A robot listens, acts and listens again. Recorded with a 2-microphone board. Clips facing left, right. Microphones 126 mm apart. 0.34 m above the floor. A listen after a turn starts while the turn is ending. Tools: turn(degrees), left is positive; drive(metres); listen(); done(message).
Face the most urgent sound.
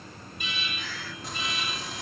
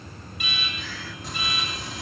turn(degrees=-90)
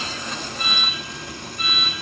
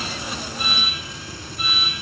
done("Found it: an alarm, straight ahead.")